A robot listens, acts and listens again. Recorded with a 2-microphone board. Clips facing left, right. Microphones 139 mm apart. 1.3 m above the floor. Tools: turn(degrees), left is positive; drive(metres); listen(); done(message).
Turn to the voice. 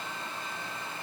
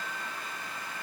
listen()
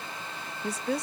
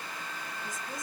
turn(degrees=90)
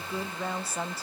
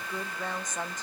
turn(degrees=10)
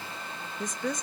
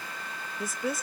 done("Facing the woman speaking, 1 to 2 m away.")